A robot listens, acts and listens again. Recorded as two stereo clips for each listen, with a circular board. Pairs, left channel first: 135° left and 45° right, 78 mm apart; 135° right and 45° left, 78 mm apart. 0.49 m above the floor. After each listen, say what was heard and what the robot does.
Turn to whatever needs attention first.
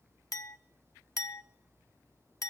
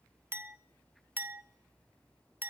Keep listening.
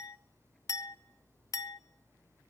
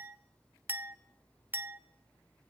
Keep listening.
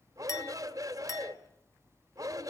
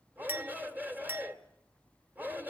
The shout: 20° right. Turn 20° right.
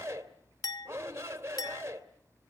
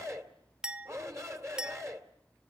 Facing the shout.